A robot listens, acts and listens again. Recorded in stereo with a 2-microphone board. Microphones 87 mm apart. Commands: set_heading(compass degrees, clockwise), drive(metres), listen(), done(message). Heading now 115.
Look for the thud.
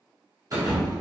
set_heading(155)
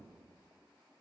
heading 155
listen()
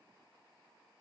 done("I heard a thud, but can't make it out now. It was about straight ahead or 100° right.")